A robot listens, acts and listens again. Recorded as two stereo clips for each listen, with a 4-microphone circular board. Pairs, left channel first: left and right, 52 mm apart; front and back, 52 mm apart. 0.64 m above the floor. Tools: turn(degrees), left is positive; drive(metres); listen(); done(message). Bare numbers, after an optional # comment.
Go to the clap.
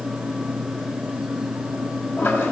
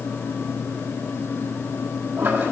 listen()
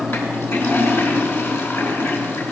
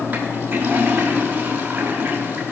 listen()
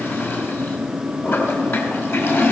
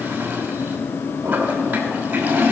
done("I can't make out a clap to turn to.")